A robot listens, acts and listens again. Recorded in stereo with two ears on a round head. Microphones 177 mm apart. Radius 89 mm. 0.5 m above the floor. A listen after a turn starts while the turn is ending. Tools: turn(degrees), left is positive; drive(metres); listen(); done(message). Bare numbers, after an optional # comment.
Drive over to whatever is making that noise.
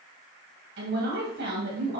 # The woman speaking: about 65° right or 115° right.
turn(-65)
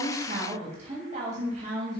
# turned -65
# So it is at 40° right.
turn(-40)
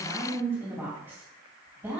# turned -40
# The woman speaking is now 10° right.
turn(-10)
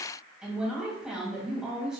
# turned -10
drive(1.0)
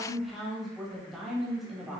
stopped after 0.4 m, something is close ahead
done("Blocked. The woman speaking is further on, straight ahead.")